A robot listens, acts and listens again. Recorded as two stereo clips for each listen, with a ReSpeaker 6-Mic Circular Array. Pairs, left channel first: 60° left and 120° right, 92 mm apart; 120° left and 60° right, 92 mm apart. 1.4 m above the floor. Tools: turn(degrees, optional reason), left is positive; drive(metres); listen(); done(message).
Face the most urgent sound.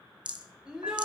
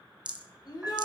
turn(degrees=160, reason="The shout: 160° left.")
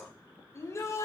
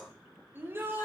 done("Facing the shout.")